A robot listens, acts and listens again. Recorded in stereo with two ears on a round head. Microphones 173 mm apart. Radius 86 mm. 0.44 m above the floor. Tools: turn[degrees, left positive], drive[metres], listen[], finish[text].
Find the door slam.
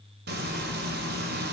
Action: listen[]
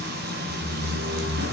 Thought: The door slam: about 65° right or 115° right.
Action: turn[-65]
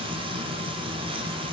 Action: listen[]
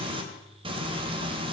Action: finish[I heard a door slam, but can't make it out now. It was about straight ahead or 50° right.]